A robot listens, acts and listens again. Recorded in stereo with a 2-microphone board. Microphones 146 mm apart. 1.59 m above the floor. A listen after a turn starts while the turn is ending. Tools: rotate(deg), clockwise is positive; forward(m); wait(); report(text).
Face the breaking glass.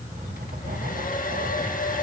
wait()
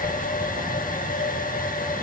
wait()
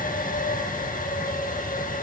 report("I can't make out breaking glass, only writing and a hair dryer.")